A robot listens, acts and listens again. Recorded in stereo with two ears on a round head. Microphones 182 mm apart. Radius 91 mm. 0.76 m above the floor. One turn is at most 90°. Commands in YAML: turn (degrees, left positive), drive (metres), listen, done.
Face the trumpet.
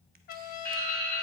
turn: 45
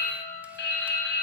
done: "Facing the trumpet."